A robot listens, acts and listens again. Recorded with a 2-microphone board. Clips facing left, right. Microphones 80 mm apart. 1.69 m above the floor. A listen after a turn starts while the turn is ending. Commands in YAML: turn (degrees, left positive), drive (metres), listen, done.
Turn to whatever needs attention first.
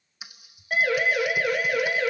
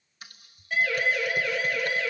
turn: 45
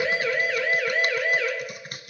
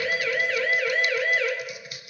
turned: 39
done: "Facing the siren."